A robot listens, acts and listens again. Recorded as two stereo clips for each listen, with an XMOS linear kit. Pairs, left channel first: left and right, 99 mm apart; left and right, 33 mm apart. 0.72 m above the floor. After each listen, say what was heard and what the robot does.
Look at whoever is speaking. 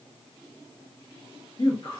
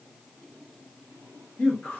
The man speaking: about 50° left or 130° left. Turn 50° left.
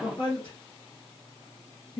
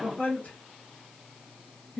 So it is at 65° left. Turn 65° left.
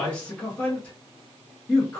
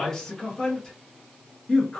The man speaking is now 15° left. Turn 15° left.
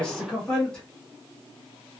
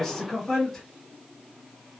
The man speaking is now 10° left. Turn 10° left.
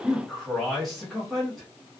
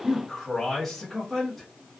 Facing the man speaking, under 1 m away.